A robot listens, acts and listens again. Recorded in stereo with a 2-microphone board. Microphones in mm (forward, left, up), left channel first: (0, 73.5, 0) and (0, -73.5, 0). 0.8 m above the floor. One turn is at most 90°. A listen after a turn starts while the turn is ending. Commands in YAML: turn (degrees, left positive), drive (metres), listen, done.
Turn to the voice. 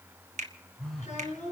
turn: 55
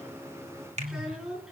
done: "Found it: a child speaking, straight ahead."